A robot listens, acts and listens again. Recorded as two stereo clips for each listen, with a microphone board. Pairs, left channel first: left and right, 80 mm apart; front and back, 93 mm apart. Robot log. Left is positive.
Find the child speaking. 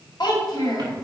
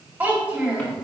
note: The child speaking: 110° left.
cmd yaw +110
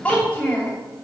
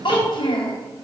note: The child speaking is now 25° left.
cmd yaw +25
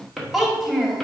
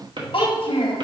end: Found it: a child speaking, straight ahead.